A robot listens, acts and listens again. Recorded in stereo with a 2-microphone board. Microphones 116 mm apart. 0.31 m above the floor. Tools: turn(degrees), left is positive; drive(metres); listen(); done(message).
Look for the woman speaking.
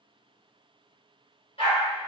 listen()
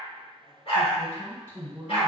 turn(degrees=-15)
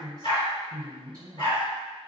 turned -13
turn(degrees=-150)
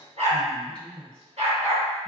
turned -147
done("Found it: a woman speaking, straight ahead, 1 to 2 m away.")